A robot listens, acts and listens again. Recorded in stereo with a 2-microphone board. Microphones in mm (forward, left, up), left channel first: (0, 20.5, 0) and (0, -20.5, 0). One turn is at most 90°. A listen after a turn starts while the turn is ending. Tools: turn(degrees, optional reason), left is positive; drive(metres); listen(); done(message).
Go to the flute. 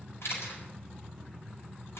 listen()
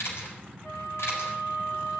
turn(degrees=55, reason="The flute: about 55° left or 125° left.")
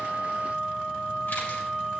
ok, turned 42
turn(degrees=10, reason="So it is at 10° left.")
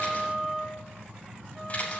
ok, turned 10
drive(metres=1.0)
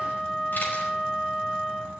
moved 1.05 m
drive(metres=1.0)
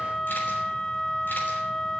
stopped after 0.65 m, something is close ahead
turn(degrees=10, reason="The flute is now 10° left.")
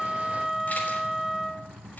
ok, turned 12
done("I am next to the flute.")